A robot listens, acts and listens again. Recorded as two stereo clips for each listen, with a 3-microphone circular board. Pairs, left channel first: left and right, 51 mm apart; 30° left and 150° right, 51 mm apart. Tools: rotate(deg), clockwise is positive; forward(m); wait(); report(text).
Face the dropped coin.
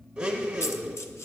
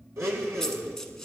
rotate(-105)
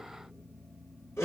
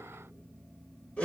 report("I heard a dropped coin from this way, but can't make it out now.")